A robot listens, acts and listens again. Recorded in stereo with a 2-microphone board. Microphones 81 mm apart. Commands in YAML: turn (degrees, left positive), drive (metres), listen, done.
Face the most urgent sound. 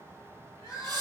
turn: 40
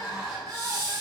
done: "Found it: crying, straight ahead, 1 to 2 m away."